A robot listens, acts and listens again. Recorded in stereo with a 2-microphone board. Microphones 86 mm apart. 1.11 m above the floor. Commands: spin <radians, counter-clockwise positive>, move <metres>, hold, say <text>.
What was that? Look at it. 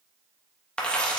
spin 0.52
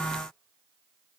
hold
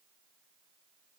say I heard a dropped coin, but can't make it out now. It was about 20° right or 140° left.